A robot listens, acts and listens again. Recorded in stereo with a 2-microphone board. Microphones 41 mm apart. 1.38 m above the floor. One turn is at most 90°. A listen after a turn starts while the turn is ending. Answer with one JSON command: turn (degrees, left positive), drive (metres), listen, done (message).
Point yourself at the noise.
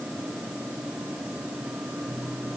{"listen": true}
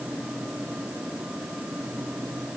{"listen": true}
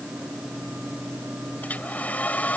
{"turn": 40}
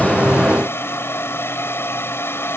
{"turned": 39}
{"turn": 90}
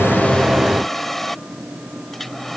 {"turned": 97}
{"done": "Facing the hair dryer."}